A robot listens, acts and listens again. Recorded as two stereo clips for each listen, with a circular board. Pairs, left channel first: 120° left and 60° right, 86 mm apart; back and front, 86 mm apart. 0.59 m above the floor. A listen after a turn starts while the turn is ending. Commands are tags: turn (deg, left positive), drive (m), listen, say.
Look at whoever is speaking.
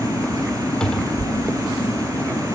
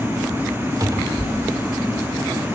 <listen/>
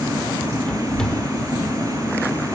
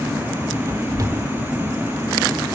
<listen/>
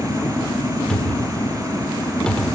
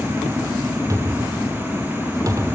<say>I can't make out anyone speaking, only a cupboard door.</say>